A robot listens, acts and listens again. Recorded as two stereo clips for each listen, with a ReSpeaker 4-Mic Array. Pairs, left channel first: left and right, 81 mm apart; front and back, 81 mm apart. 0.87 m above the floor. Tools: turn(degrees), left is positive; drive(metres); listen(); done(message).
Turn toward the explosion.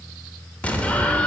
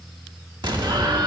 turn(degrees=165)
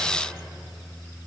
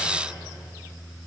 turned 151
turn(degrees=15)
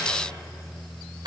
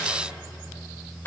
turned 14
done("I heard an explosion from this way, but can't make it out now.")